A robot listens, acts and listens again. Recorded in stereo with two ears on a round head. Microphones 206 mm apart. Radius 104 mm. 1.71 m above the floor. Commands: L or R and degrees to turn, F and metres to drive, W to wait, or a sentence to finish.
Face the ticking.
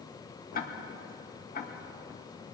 L40
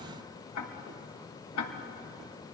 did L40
L95
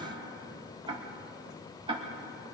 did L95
R25
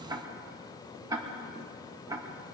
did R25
R15
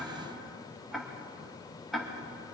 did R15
Facing the ticking.